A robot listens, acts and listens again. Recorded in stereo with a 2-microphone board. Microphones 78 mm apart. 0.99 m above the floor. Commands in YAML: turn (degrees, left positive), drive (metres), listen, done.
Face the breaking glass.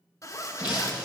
turn: -20
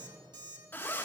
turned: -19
listen: true
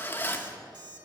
done: "I heard breaking glass, but can't make it out now. It was about straight ahead or 145° right."